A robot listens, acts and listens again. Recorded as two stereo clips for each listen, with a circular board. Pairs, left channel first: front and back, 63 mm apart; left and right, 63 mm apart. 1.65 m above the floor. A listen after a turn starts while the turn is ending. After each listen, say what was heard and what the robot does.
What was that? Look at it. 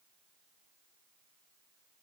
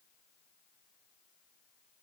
Keep listening.
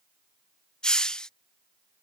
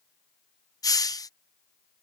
The hiss: 75° left. Turn 75° left.
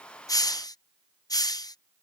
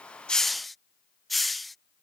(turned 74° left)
Facing the hiss.